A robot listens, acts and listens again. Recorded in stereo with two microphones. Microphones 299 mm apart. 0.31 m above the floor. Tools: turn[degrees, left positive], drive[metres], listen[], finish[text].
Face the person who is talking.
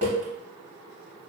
Action: listen[]
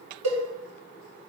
Action: listen[]
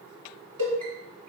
Action: finish[I can't make out anyone speaking, only a cowbell.]